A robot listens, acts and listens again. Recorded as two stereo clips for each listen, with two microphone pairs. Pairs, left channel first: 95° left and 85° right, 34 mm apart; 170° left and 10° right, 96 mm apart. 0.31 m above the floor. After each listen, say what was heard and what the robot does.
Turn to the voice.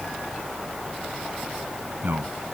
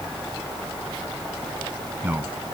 The man speaking: 75° right. Turn 75° right.
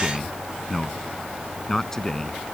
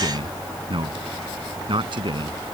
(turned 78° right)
The man speaking is now 20° left. Turn 20° left.
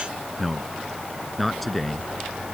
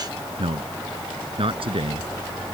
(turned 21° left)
The man speaking is now 10° left. Turn 10° left.
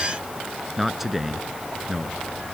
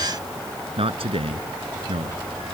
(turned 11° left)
Found it: a man speaking, straight ahead.